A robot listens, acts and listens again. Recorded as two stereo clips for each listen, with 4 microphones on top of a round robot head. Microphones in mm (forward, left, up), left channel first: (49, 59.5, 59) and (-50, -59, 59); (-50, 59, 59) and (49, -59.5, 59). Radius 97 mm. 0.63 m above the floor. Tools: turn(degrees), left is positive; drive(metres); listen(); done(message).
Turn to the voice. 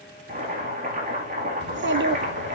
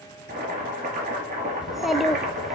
turn(degrees=-140)
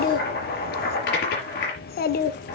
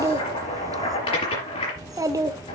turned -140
turn(degrees=20)
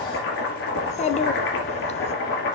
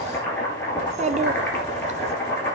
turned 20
done("Facing the child speaking, 1 to 2 m away.")